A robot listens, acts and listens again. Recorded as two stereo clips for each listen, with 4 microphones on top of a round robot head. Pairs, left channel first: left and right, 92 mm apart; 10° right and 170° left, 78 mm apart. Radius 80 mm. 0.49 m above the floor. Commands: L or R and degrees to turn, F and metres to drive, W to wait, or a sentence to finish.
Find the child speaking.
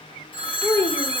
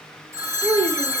L160
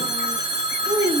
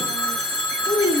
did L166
R40
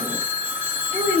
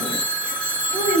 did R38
R15
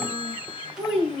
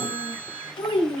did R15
R10
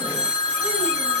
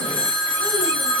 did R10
W
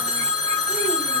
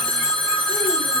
W
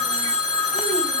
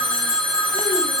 I heard a child speaking from this way, but can't make it out now.